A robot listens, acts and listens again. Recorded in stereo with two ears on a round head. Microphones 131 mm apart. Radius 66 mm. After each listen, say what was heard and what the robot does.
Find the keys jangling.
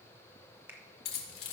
Turn 90° left.
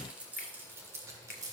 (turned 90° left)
So it is at 25° right. Turn 25° right.
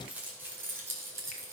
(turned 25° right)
The keys jangling is now 20° right. Turn 20° right.
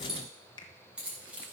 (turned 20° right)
The keys jangling is now 10° right. Turn 10° right.
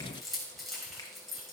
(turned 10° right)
Facing the keys jangling, 2 to 4 m away.